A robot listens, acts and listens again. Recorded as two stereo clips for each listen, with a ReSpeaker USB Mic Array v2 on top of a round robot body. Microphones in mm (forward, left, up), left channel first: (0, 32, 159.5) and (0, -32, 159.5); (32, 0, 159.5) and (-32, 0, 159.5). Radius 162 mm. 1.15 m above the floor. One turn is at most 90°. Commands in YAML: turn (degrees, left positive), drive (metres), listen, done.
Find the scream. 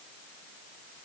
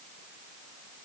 listen: true
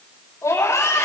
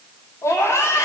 turn: 45
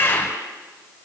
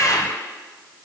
turn: 30
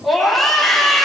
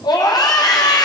done: "Found it: a scream, straight ahead, over 4 m away."